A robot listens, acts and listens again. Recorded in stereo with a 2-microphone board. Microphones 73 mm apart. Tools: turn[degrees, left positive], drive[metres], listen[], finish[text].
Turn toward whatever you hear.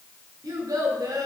Thought: The child speaking: about 65° right or 115° right.
Action: turn[-65]
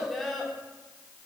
Action: finish[Found it: a child speaking, straight ahead.]